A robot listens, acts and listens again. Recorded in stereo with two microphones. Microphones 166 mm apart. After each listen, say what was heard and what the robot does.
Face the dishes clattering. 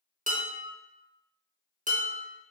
The dishes clattering: about 50° right or 130° right. Turn 50° right.
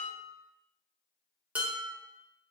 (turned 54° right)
So it is at 10° right. Turn 10° right.
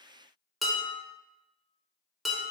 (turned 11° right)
Facing the dishes clattering.